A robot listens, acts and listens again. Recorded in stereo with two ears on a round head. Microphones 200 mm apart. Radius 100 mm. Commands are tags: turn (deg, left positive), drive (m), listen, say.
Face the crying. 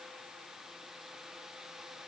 <listen/>
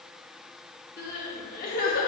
<turn deg="40"/>
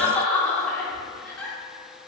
<say>Found it: crying, straight ahead, under 1 m away.</say>